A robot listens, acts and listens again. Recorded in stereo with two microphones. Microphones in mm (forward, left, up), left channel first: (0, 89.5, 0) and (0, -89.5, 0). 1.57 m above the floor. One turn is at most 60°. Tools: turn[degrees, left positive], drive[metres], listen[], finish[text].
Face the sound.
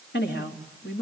Action: turn[60]
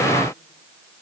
Thought: Nothing new. It was at 30° left.
Action: turn[30]
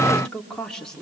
Action: finish[Found it: a woman speaking, straight ahead, over 4 m away.]